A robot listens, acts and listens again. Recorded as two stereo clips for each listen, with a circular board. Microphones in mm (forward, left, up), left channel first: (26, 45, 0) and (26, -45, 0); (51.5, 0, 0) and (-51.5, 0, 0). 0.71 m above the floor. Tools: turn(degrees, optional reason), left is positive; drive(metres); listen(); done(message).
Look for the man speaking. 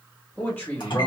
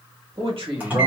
turn(degrees=160, reason="The man speaking: 160° left.")
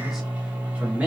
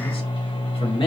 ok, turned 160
turn(degrees=-20, reason="The man speaking is now 20° right.")
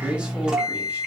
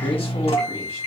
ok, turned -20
listen()
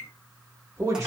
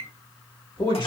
turn(degrees=-35, reason="The man speaking is now 35° right.")
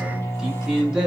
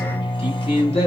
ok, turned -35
done("Found it: a man speaking, straight ahead, 1 to 2 m away.")